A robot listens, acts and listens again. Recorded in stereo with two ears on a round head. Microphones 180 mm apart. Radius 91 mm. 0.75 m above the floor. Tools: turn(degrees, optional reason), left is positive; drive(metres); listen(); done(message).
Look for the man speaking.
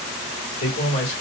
turn(degrees=60, reason="The man speaking: about 60° left or 120° left.")
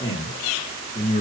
turn(degrees=30, reason="So it is at 30° left.")
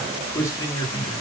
turn(degrees=20, reason="The man speaking is now 20° left.")
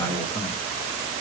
turn(degrees=20, reason="The man speaking is now 20° left.")
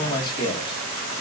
turn(degrees=25, reason="The man speaking is now 25° left.")
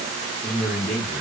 done("Found it: a man speaking, straight ahead, 1 to 2 m away.")